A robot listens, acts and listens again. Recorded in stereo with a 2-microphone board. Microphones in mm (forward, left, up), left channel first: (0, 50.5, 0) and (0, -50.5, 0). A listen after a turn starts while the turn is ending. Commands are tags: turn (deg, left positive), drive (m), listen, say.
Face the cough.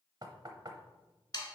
<listen/>
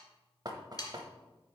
<listen/>
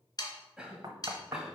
<turn deg="-30"/>
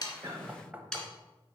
<turn deg="-135"/>
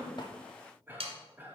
<turn deg="-25"/>
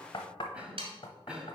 <turn deg="-15"/>
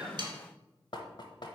<listen/>
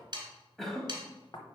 <say>Facing the cough, 1 to 2 m away.</say>